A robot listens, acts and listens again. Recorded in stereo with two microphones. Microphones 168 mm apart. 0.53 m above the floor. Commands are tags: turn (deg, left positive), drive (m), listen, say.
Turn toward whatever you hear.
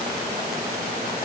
<listen/>
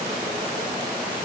<listen/>
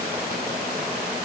<say>I can't make out anything.</say>